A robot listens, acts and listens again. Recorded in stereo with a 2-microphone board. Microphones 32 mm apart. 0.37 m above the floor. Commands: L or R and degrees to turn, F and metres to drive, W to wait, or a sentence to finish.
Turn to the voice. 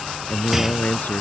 L65
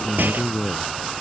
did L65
Found it: a man speaking, straight ahead.